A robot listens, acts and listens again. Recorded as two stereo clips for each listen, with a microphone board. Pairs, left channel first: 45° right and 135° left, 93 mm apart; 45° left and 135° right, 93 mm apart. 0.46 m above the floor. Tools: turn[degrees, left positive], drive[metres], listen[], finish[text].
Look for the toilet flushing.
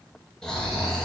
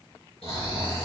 Action: listen[]
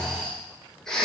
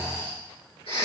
Action: listen[]
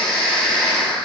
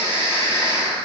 Action: finish[I can't make out a toilet flushing, only snoring.]